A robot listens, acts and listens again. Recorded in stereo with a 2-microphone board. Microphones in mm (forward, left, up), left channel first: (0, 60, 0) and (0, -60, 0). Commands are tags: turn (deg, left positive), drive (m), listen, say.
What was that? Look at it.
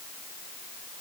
<listen/>
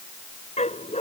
<turn deg="70"/>
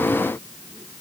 <listen/>
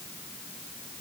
<listen/>
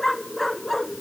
<say>Found it: a dog barking, straight ahead.</say>